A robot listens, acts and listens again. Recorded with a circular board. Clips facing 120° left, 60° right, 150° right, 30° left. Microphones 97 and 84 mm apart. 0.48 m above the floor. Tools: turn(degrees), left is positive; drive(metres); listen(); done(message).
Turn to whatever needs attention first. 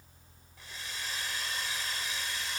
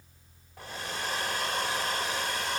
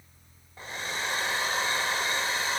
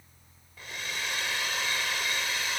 listen()
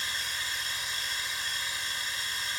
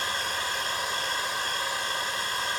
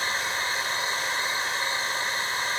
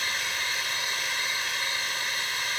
listen()
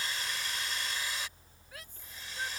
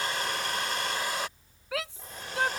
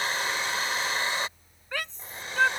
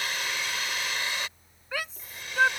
turn(degrees=-55)
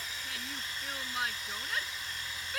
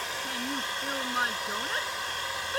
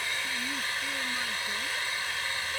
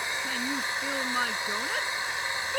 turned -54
done("Facing the shout.")